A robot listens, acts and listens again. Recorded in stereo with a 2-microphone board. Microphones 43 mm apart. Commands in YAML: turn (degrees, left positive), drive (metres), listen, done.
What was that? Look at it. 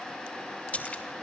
turn: 30
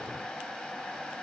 listen: true
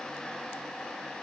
done: "I heard a splash, but can't make it out now. It was about straight ahead or 120° left."